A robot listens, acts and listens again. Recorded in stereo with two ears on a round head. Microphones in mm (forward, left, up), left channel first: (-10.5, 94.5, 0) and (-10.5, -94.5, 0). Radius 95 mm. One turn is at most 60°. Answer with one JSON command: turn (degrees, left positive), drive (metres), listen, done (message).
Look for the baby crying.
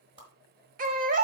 {"turn": -40}
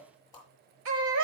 {"turn": -60}
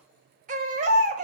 {"turn": -40}
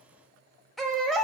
{"done": "Found it: a baby crying, straight ahead, 1 to 2 m away."}